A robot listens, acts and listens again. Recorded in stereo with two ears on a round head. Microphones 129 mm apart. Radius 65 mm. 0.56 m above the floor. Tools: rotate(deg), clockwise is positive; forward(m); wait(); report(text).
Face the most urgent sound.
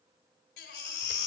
rotate(-90)
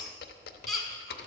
report("Facing the baby crying, 1 to 2 m away.")